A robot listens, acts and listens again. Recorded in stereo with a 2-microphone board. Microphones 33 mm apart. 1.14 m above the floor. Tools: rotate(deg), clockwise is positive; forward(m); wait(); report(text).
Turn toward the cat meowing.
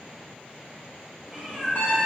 rotate(-30)
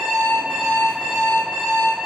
wait()
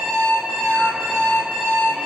wait()
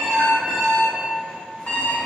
report("I heard a cat meowing, but can't make it out now. It was about 25° right or 145° left.")